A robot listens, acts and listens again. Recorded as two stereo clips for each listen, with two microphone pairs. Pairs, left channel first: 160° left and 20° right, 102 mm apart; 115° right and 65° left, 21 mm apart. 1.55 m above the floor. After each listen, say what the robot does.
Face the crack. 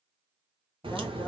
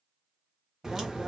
Turn 10° left.
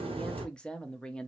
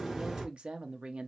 Facing the crack.